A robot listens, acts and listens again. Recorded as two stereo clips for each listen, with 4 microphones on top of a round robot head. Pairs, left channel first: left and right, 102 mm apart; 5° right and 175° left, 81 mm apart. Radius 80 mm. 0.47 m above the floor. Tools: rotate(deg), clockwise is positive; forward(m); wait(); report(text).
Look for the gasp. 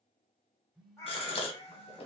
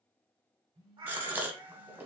rotate(-110)
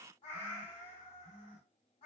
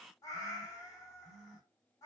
report("Facing where the gasp came from. I can't hear it now.")